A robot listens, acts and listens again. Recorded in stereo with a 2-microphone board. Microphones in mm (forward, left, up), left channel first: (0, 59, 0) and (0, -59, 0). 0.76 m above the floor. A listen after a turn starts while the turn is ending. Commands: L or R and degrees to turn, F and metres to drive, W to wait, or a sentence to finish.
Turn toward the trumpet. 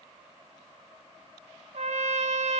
R65
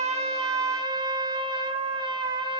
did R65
R40
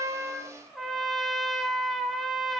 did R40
Found it: a trumpet, straight ahead, 1 to 2 m away.